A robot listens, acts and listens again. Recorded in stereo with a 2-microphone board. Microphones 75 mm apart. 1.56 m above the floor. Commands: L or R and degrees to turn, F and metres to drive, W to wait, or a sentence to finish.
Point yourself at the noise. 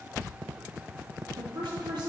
R90
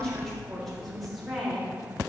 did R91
Found it: a woman speaking, straight ahead.